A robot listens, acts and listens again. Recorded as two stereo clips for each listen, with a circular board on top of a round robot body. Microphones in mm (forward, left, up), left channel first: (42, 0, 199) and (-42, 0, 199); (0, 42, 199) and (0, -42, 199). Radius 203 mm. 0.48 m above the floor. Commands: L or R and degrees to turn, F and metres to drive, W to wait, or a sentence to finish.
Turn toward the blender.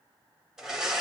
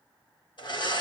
L95
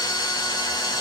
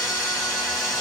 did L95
W
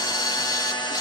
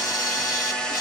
L10
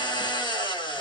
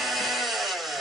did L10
Found it: a blender, straight ahead, 1 to 2 m away.